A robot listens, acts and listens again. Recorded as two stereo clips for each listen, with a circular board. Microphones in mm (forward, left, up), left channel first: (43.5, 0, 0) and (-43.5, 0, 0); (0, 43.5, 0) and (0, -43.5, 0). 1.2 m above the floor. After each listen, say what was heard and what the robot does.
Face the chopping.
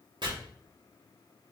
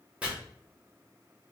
The chopping: 165° right. Turn 165° right.
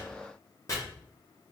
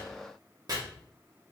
The chopping is now 50° right. Turn 50° right.
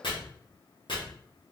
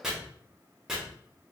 Facing the chopping, 1 to 2 m away.